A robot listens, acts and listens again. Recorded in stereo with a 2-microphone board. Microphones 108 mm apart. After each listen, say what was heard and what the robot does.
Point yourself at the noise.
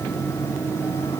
Keep listening.
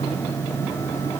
Keep listening.
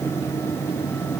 I can't make out anything.